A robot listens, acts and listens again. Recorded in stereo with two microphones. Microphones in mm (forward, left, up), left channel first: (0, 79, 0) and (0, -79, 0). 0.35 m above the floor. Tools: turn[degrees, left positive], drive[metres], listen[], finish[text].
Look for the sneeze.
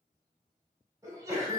Thought: The sneeze: about 20° right or 160° right.
Action: turn[-20]
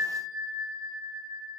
Action: listen[]
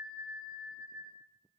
Action: finish[I heard a sneeze, but can't make it out now. It was about straight ahead or 140° right.]